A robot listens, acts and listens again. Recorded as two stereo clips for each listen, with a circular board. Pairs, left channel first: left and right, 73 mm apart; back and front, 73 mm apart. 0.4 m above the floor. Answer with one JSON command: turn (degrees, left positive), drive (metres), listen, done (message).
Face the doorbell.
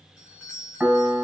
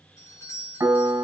{"turn": -160}
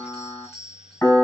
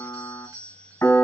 {"done": "Facing the doorbell."}